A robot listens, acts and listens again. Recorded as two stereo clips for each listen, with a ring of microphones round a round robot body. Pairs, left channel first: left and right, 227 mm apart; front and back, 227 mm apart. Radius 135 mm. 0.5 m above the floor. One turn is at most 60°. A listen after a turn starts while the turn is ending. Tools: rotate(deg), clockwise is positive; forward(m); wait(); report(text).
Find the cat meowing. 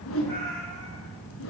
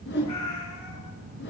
rotate(-10)
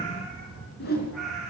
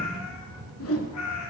report("Facing the cat meowing, over 4 m away.")